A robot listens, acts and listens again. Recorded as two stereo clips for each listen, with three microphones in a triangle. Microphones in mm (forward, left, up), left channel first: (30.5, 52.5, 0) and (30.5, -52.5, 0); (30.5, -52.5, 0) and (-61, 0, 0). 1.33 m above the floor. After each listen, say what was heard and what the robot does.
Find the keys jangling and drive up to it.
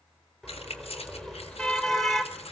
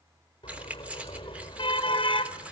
The keys jangling: 75° left. Turn 75° left.
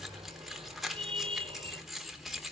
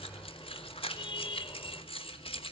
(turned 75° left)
Drive 1.0 m forward.
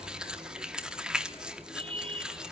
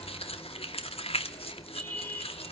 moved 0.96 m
Drive 1.0 m forward.
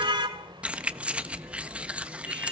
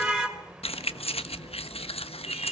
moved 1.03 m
The keys jangling is now 10° right. Turn 10° right.
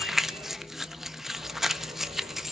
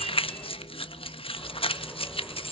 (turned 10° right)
Drive 1.0 m forward.
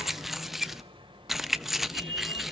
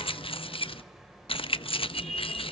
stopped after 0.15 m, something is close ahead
I am next to the keys jangling.